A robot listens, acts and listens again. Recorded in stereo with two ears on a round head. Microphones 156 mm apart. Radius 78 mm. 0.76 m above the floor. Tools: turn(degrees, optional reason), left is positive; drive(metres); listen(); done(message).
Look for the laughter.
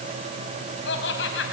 turn(degrees=75, reason="The laughter: about 75° left or 105° left.")
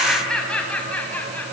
turn(degrees=10, reason="So it is at 10° left.")
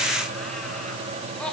listen()
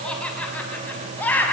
turn(degrees=10, reason="The laughter is now 10° left.")
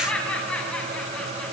done("Facing the laughter, over 4 m away.")